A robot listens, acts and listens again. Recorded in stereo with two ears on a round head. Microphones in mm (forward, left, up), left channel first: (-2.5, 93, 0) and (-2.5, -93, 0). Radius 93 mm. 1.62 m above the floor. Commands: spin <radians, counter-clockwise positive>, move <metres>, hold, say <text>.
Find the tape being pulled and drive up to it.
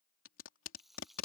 spin 1.13
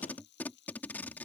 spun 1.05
spin 0.17
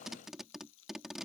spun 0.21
move 1.0
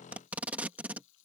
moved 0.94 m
move 1.0
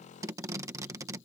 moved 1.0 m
spin -0.26
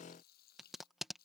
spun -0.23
move 1.0
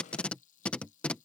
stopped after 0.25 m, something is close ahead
say Arrived at the tape being pulled, straight ahead.